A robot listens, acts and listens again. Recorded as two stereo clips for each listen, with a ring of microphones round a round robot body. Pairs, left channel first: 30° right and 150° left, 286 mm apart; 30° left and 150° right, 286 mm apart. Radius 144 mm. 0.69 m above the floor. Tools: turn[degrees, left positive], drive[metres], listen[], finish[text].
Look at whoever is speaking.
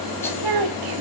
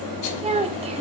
Thought: The child speaking: 140° left.
Action: turn[140]
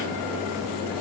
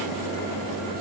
Action: listen[]
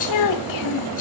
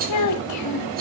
Action: finish[Facing the child speaking.]